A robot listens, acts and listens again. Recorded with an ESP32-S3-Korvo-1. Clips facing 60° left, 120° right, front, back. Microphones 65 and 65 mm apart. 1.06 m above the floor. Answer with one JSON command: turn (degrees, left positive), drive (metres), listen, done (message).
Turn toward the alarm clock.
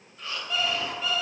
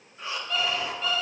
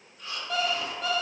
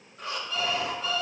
{"turn": -25}
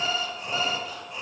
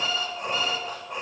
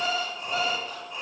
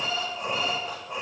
{"done": "Found it: an alarm clock, straight ahead, 1 to 2 m away."}